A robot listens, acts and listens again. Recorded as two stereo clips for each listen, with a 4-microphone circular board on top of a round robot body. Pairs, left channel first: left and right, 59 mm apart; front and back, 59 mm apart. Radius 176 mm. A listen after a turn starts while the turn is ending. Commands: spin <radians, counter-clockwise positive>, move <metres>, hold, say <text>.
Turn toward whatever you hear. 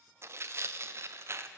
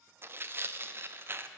spin -2.27
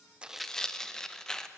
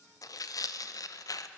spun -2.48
spin 0.17
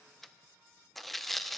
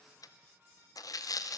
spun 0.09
say Found it: tearing paper, straight ahead.